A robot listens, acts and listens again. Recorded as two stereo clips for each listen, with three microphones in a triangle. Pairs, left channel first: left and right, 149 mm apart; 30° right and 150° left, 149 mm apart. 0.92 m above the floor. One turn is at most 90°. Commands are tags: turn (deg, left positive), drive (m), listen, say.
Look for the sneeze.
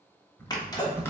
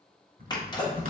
<turn deg="30"/>
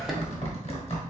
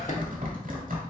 <say>Found it: a sneeze, straight ahead.</say>